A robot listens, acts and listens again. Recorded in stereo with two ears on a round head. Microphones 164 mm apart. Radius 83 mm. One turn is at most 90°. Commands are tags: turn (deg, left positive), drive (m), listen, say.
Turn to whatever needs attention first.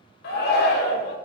<turn deg="60"/>
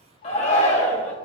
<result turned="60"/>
<turn deg="40"/>
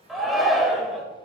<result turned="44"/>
<say>Facing the shout.</say>